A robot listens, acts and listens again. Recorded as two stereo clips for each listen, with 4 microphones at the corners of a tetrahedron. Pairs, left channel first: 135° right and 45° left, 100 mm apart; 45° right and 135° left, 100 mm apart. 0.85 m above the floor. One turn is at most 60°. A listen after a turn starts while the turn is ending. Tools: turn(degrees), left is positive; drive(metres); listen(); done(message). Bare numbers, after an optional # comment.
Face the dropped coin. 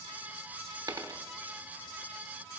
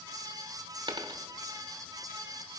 # The dropped coin: 95° left.
turn(60)
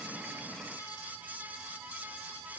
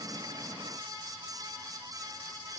# Nothing new. It was at 35° left.
turn(35)
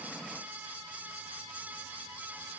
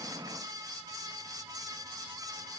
done("I heard a dropped coin from this way, but can't make it out now.")